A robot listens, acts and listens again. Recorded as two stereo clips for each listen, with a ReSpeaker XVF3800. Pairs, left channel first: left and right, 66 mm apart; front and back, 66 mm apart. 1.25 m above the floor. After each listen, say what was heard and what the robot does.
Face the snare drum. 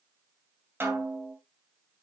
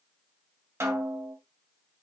The snare drum: 140° right. Turn 140° right.
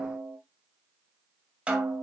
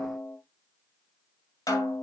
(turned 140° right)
The snare drum is now 15° right. Turn 15° right.
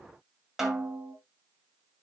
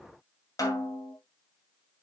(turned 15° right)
Found it: a snare drum, straight ahead.